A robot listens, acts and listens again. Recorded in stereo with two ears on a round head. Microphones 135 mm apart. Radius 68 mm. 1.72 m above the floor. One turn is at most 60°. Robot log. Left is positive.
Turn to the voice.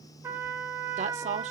note: The woman speaking: about 50° right or 130° right.
cmd yaw -50
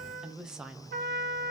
end: Facing the woman speaking.